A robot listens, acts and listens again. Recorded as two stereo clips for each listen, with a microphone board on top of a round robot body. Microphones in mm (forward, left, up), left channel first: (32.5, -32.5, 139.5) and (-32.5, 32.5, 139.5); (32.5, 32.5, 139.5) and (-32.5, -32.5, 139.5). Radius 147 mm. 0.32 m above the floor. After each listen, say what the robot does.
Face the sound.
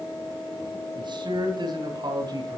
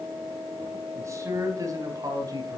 Turn 180° left.
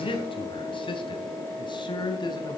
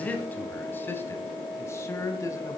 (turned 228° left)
Turn 10° right.
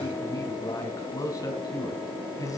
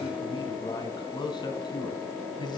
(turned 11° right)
Found it: a man speaking, straight ahead.